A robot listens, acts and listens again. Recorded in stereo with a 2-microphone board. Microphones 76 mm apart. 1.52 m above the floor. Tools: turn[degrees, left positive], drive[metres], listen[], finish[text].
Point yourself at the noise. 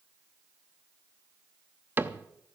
Thought: The cupboard door: about 25° right or 155° right.
Action: turn[-25]
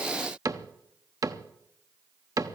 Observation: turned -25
Thought: So it is at 130° right.
Action: turn[-130]
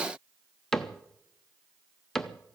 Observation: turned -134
Action: finish[Facing the cupboard door, under 1 m away.]